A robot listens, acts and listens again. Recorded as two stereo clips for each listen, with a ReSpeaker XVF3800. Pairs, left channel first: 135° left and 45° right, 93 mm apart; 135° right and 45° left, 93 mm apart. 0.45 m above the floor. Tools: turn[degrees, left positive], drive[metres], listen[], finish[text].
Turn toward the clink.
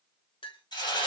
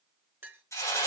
Thought: The clink: 115° left.
Action: turn[115]
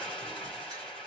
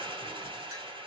Action: listen[]
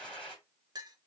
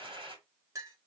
Action: finish[Facing the clink, 1 to 2 m away.]